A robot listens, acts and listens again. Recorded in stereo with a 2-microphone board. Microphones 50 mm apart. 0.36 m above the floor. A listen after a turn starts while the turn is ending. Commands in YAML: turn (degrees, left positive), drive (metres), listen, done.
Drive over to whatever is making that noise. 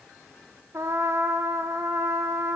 turn: -65
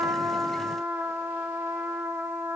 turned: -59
turn: -55
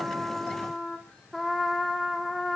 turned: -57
drive: 1.0
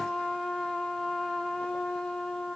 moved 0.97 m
turn: 10
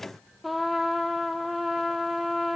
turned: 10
drive: 1.0
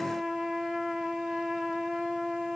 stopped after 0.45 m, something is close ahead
done: "I am next to the trumpet."